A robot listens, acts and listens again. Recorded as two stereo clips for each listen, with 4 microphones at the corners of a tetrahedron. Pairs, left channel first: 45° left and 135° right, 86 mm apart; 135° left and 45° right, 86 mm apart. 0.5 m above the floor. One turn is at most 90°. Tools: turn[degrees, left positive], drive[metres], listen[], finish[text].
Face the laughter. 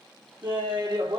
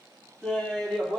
Thought: The laughter: 135° right.
Action: turn[-90]
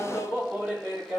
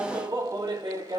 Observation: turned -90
Thought: The laughter is now 50° right.
Action: turn[-50]
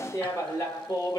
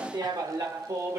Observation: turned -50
Thought: The laughter is now 10° right.
Action: turn[-10]
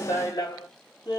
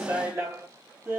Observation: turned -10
Thought: The laughter is now 15° left.
Action: turn[15]
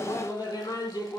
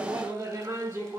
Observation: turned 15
Action: finish[Facing the laughter, 2 to 4 m away.]